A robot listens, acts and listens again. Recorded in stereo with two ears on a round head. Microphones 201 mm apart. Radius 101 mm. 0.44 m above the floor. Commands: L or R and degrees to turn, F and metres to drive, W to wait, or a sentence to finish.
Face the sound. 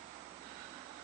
W
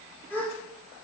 L30
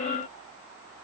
W
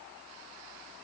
I heard a gasp, but can't make it out now. It was about 20° right or 140° left.